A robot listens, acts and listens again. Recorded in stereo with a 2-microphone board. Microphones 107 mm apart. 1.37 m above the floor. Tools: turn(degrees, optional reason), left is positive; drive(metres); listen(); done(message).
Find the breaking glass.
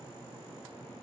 listen()
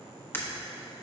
turn(degrees=20, reason="The breaking glass: about 20° left or 160° left.")
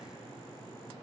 listen()
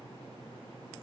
done("I heard breaking glass, but can't make it out now. It was about straight ahead or 140° left.")